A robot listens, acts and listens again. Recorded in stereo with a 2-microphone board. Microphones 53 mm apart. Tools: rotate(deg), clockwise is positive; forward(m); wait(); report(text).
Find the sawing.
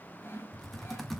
rotate(-45)
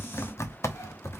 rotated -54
wait()
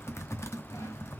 wait()
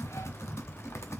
report("I heard sawing, but can't make it out now. It was about 10° right or 80° left.")